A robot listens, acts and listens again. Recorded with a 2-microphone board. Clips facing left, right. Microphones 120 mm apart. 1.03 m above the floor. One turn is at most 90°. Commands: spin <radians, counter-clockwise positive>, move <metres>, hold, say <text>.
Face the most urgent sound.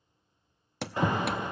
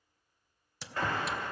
spin 0.35
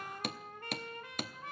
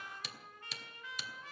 hold
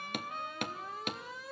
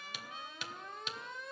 say Found it: an alarm, straight ahead.